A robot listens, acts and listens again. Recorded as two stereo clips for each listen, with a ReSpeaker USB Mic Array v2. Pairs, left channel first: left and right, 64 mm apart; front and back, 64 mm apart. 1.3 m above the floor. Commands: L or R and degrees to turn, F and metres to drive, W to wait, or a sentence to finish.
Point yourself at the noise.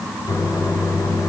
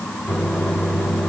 L95
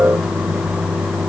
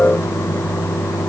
Found it: a microwave, straight ahead, 2 to 4 m away.